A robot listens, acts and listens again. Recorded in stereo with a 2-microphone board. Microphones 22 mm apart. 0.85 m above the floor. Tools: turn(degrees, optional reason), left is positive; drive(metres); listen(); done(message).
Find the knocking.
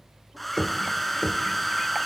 turn(degrees=30, reason="The knocking: about 30° left or 150° left.")
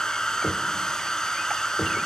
done("Facing the knocking, 1 to 2 m away.")